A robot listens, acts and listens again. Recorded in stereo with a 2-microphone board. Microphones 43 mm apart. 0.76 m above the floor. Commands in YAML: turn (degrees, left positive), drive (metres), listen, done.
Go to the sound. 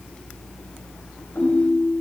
turn: 90
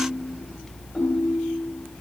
turn: -15
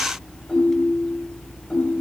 drive: 1.0
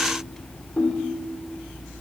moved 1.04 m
drive: 1.0
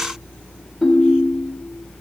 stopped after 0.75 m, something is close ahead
done: "I am next to the ringtone."